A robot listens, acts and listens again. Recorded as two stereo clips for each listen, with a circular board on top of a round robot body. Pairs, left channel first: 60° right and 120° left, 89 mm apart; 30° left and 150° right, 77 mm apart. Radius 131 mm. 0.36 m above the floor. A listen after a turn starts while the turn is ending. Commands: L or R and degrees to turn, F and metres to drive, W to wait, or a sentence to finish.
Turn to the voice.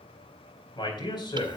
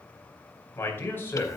R30
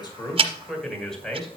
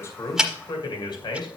L25
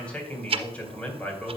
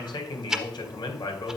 L15
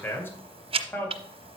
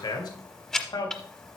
Found it: a man speaking, straight ahead.